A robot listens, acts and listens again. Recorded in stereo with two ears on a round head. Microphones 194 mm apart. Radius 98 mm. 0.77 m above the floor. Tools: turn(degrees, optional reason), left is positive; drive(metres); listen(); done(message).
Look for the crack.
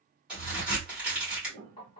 turn(degrees=-30)
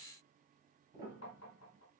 listen()
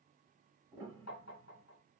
done("I heard a crack, but can't make it out now. It was about 25° left or 145° right.")